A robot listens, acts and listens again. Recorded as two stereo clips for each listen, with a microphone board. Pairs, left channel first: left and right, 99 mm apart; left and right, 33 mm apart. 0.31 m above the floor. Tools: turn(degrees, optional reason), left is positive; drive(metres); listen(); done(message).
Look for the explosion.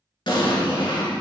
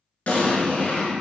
turn(degrees=60, reason="The explosion: about 60° left or 120° left.")
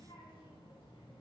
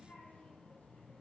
listen()
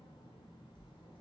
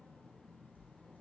done("I heard an explosion, but can't make it out now. It was about straight ahead or 60° left.")